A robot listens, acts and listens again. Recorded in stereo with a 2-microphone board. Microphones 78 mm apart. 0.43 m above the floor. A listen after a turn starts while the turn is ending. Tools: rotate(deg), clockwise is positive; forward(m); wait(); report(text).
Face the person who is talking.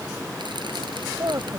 rotate(40)
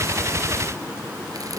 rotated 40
wait()
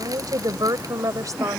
rotate(50)
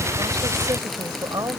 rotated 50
rotate(60)
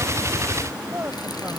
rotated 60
rotate(30)
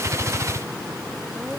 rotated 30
wait()
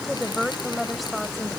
report("Facing the woman speaking.")